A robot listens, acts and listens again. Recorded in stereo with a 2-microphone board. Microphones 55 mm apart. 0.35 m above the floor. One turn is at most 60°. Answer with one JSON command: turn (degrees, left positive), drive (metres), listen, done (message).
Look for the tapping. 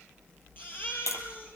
{"turn": 60}
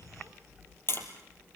{"turn": 50}
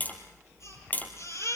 {"turn": 30}
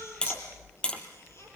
{"turn": 15}
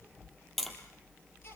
{"done": "Found it: tapping, straight ahead."}